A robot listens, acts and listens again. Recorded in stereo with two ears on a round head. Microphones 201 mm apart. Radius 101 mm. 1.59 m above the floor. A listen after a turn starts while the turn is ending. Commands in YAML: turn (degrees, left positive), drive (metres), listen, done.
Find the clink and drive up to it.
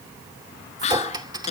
turn: -20
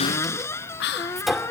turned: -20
drive: 1.0
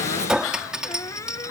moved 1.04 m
drive: 1.0
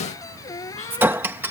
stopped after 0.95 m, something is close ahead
turn: -10
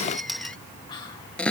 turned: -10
done: "I am next to the clink."